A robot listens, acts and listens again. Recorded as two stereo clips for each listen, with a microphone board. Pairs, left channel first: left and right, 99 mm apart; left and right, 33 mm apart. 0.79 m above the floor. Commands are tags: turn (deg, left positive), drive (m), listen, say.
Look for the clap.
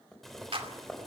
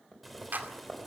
<turn deg="-70"/>
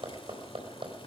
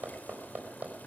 <listen/>
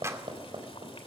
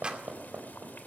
<turn deg="-30"/>
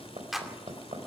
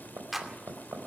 <say>Found it: a clap, straight ahead.</say>